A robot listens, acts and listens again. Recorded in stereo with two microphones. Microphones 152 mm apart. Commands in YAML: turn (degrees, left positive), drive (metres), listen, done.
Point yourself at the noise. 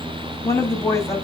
turn: 20
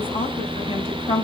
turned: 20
turn: 140
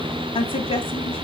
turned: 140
turn: 40
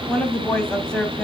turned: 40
done: "Facing the woman speaking."